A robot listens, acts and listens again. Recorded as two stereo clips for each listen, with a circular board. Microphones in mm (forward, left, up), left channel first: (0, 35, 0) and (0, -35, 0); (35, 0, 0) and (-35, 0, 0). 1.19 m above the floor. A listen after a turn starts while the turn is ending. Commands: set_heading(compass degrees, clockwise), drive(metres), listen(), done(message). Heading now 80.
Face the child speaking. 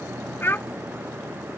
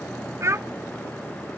set_heading(300)
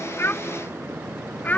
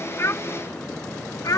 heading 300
set_heading(275)
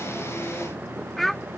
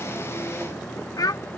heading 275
done("Found it: a child speaking, straight ahead.")